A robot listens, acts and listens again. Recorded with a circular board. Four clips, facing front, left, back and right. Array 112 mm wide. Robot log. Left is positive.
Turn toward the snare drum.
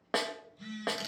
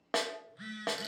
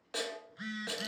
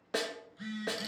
note: The snare drum: 35° left.
cmd yaw +35
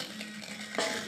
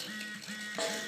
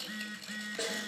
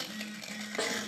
end: Facing the snare drum, 1 to 2 m away.